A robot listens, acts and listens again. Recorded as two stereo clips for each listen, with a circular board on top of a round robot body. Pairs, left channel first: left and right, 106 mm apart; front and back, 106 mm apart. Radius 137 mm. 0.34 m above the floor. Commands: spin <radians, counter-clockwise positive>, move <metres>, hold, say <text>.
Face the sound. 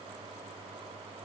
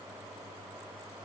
hold
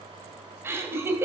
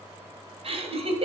spin -2.71
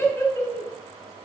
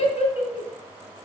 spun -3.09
spin 0.44
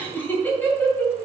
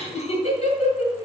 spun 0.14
spin 0.35
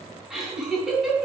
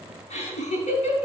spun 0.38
say Found it: laughter, straight ahead.